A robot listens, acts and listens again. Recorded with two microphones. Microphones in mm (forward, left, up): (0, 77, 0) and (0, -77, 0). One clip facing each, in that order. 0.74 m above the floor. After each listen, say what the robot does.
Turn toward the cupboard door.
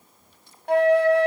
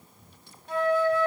Keep listening.
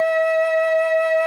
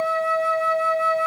Keep listening.
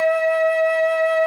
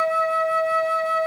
I can't make out a cupboard door, only a flute.